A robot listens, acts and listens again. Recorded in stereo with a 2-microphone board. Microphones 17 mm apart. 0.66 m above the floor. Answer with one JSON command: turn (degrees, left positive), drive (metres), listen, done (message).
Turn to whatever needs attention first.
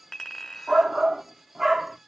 {"turn": -25}
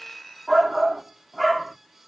{"done": "Facing the shout."}